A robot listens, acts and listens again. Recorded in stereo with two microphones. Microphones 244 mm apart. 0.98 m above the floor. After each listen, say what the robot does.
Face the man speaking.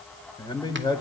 Turn 15° left.
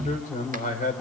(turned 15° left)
Turn 150° left.
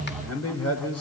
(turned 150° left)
Turn 70° left.
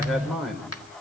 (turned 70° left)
Found it: a man speaking, straight ahead.